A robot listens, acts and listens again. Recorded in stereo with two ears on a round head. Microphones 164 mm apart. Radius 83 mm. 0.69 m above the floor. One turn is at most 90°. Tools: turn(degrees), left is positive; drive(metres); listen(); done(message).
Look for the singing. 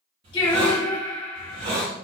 turn(degrees=25)
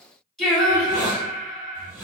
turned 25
done("Facing the singing, under 1 m away.")